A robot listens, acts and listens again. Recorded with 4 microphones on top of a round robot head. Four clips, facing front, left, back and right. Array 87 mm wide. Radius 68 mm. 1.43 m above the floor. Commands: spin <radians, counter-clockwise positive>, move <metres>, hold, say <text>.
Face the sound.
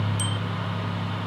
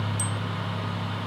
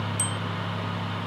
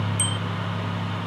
spin -2.18
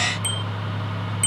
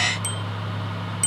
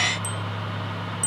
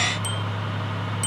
spin 0.52
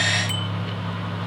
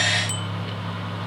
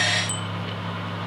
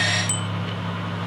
spin -0.35
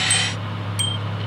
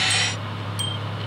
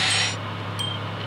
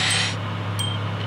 say Found it: a bicycle bell, straight ahead.